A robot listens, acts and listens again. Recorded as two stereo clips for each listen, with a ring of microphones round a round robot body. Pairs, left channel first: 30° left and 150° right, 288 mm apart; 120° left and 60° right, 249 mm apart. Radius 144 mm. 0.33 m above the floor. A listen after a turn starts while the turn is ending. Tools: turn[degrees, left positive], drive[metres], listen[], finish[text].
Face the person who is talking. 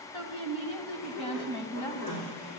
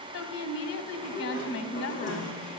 Thought: The woman speaking: 100° left.
Action: turn[100]
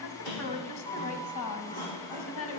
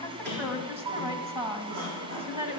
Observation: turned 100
Action: finish[Facing the woman speaking, 2 to 4 m away.]